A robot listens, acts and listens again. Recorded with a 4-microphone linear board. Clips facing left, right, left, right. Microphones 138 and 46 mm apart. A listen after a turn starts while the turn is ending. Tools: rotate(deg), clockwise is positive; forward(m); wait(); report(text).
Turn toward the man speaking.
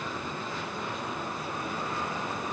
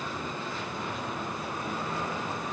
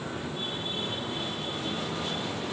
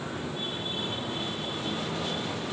wait()
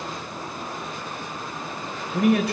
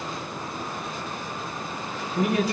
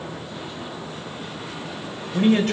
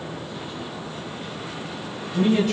rotate(-70)
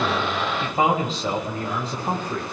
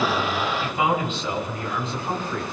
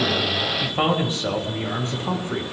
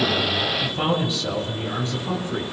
rotate(-40)
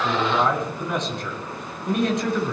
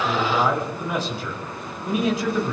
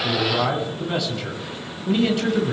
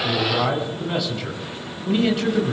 report("Found it: a man speaking, straight ahead, over 4 m away.")